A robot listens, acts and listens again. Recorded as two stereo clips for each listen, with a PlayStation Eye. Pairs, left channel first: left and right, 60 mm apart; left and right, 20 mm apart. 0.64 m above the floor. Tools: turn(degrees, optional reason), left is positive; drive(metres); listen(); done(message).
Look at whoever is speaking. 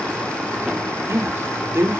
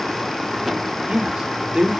turn(degrees=-45, reason="The man speaking: about 45° right or 135° right.")
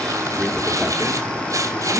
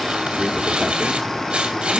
listen()
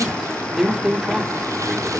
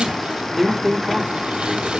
turn(degrees=-10, reason="So it is at 10° right.")
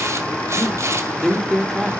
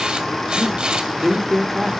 done("Facing the man speaking.")